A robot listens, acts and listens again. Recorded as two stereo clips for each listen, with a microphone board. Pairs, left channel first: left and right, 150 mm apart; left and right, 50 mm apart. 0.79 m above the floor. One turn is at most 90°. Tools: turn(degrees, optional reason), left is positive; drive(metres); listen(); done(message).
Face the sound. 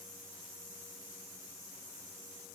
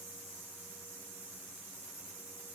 listen()
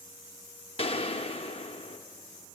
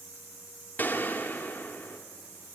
turn(degrees=40, reason="The gunshot: about 40° left or 140° left.")
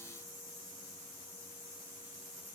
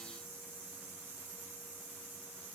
listen()
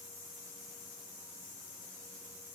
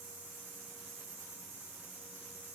done("I heard a gunshot, but can't make it out now. It was about straight ahead or 100° left.")